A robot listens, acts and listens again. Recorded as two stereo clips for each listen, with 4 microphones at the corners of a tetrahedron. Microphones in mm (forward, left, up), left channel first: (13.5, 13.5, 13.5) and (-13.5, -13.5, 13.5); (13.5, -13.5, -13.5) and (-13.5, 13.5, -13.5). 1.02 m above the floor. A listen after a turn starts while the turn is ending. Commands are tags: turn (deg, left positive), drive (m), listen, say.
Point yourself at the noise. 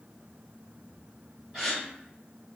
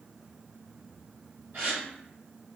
<turn deg="135"/>
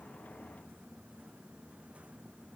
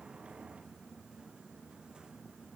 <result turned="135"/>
<say>Facing where the gasp came from. I can't hear it now.</say>